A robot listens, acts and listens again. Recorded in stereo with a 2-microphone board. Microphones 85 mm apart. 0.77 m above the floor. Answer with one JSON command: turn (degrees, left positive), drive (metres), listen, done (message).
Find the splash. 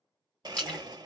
{"turn": 30}
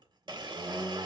{"listen": true}
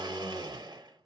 {"done": "I heard a splash, but can't make it out now. It was about 15° right or 135° left."}